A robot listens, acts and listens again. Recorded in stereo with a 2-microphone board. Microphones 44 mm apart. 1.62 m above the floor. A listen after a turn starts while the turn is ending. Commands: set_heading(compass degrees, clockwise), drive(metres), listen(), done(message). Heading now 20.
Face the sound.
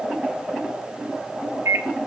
set_heading(90)
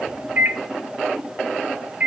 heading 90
set_heading(125)
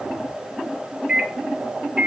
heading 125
set_heading(145)
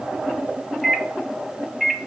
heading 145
done("Found it: a microwave, straight ahead.")